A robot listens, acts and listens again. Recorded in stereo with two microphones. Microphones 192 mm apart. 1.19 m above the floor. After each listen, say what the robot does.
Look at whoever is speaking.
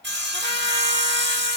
Keep listening.
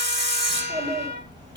Turn 20° right.
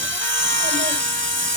Keep listening.
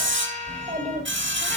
Turn 40° right.
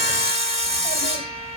Keep listening.
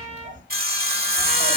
Turn 100° right.
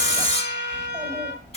Turn 15° right.
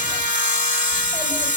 Keep listening.
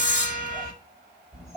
Facing the child speaking, over 4 m away.